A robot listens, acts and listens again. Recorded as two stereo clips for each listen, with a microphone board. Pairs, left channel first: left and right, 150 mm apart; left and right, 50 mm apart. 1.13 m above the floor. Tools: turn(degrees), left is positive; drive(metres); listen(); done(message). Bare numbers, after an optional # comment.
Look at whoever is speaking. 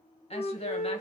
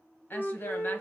# The woman speaking: about 40° left or 140° left.
turn(40)
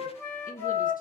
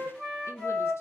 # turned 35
# So it is at 95° left.
turn(95)
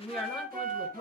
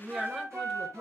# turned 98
done("Found it: a woman speaking, straight ahead.")